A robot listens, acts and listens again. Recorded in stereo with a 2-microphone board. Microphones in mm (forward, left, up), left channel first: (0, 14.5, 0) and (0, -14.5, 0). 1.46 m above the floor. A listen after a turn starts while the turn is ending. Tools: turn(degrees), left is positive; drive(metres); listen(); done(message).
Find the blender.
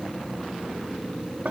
listen()
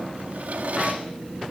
listen()
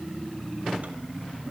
done("I can't make out a blender to turn to.")